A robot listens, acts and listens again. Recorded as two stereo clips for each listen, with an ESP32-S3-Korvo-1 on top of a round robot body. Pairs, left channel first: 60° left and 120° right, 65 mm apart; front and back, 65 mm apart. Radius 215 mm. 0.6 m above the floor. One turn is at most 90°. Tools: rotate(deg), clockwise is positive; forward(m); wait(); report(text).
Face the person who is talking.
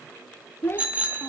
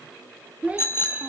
rotate(-90)
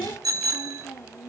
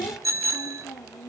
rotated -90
rotate(-20)
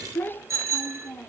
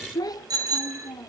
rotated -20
report("Found it: a child speaking, straight ahead.")